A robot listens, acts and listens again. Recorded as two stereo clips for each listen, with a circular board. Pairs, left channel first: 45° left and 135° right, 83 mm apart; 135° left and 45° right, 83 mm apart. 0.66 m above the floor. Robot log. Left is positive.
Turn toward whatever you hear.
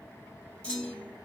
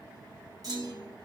note: The clunk: 30° right.
cmd yaw -30
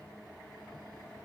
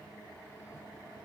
end: Facing where the clunk came from. I can't hear it now.